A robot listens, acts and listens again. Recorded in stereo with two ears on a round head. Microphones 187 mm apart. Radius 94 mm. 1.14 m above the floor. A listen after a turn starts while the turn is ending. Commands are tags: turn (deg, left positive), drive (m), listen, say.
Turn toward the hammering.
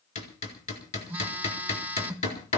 <turn deg="35"/>
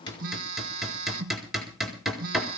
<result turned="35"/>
<say>Found it: hammering, straight ahead, over 4 m away.</say>